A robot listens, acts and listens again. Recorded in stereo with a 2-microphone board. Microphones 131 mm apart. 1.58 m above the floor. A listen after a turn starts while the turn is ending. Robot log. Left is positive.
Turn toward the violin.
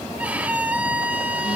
cmd yaw -30
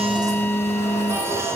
cmd idle
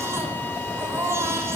cmd idle
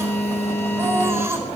end: I heard a violin, but can't make it out now. It was about 20° left or 140° right.